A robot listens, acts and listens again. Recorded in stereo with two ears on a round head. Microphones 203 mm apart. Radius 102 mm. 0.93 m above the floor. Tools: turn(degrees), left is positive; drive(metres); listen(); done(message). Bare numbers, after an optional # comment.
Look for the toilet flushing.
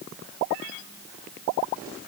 listen()
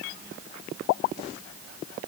listen()
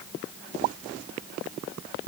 done("I can't make out a toilet flushing to turn to.")